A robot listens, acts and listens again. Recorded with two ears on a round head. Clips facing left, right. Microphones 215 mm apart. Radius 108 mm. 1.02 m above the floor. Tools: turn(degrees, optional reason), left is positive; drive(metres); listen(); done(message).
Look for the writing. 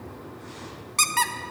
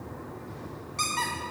listen()
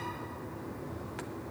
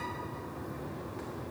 listen()
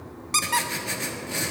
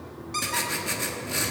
turn(degrees=-30)
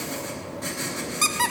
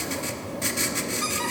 turn(degrees=-140, reason="So it is at 140° right.")
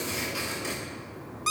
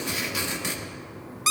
turn(degrees=-30, reason="The writing is now 30° right.")
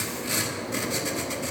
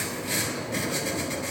turn(degrees=15, reason="The writing is now 15° left.")
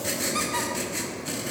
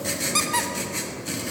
done("Facing the writing, 1 to 2 m away.")